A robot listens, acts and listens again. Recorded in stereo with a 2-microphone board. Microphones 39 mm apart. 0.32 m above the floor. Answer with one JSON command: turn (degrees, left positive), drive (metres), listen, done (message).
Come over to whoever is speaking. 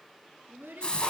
{"turn": -75}
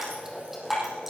{"listen": true}
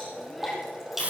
{"listen": true}
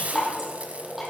{"done": "I heard a child speaking, but can't make it out now. It was about straight ahead or 30° right. I did not reach it."}